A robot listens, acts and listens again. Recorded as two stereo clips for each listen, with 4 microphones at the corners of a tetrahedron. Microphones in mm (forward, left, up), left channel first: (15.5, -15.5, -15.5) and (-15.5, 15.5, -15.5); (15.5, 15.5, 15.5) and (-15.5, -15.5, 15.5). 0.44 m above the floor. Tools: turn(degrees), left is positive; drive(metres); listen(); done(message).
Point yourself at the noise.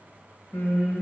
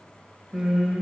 turn(degrees=-50)
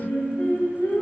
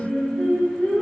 turn(degrees=-20)
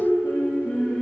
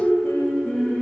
done("Facing the singing, 1 to 2 m away.")